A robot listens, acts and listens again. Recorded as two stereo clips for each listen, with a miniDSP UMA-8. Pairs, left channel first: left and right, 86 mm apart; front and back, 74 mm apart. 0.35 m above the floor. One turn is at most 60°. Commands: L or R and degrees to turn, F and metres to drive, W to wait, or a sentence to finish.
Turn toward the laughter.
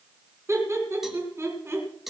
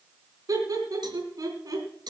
R60
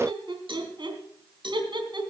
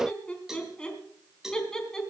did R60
R60
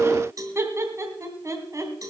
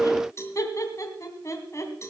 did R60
R40
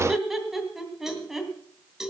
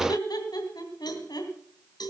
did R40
Facing the laughter.